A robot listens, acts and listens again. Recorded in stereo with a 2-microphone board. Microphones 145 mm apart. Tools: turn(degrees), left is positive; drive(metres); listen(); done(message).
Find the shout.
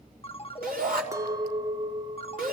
turn(degrees=-90)
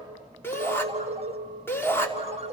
turn(degrees=15)
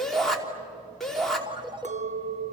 done("Found it: a shout, straight ahead, 2 to 4 m away.")